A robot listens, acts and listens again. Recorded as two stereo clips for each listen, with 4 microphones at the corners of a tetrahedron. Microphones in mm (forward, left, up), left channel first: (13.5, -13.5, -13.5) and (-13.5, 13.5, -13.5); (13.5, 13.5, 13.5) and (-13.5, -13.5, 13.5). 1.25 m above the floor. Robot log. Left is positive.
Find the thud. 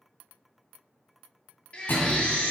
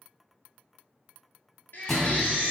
note: The thud: 40° right.
cmd yaw -40
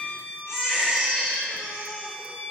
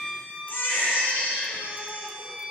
end: Facing where the thud came from. I can't hear it now.